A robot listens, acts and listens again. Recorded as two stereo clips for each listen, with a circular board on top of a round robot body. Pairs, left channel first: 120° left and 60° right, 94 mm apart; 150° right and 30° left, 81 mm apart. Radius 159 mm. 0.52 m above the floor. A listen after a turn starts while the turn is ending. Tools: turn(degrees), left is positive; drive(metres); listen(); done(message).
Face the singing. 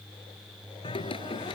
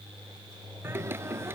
turn(degrees=90)
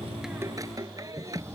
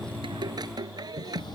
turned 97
turn(degrees=-10)
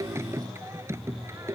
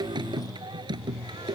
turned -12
done("Facing the singing.")